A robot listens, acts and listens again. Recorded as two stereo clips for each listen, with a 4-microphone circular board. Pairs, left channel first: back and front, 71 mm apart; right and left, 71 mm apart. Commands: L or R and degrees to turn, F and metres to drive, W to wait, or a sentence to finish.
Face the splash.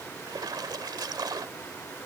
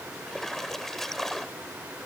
Found it: a splash, straight ahead.